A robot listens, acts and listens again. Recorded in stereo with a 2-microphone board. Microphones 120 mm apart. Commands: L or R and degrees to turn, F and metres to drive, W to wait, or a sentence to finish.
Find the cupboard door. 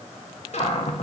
L60
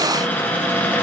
L15
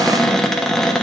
Facing the cupboard door.